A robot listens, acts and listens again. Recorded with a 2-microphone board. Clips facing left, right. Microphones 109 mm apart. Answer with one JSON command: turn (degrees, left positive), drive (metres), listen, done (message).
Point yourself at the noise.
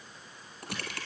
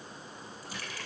{"turn": 60}
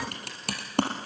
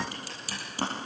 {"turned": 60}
{"turn": 60}
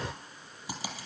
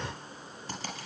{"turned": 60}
{"turn": 10}
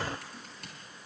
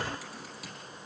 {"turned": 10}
{"done": "Found it: typing on a keyboard, straight ahead, over 4 m away."}